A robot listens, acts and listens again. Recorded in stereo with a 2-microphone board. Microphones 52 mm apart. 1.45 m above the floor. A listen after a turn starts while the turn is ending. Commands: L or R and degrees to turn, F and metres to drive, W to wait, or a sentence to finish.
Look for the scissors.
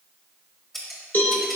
L30
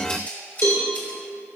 L145
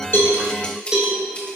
L20
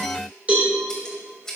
L10
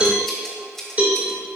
Facing the scissors.